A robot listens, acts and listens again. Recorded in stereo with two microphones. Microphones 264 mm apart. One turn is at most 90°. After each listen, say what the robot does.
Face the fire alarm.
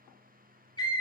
Keep listening.
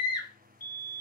Turn 65° left.
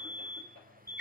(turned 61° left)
Turn 10° left.
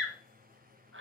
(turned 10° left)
Keep listening.
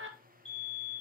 Facing the fire alarm, over 4 m away.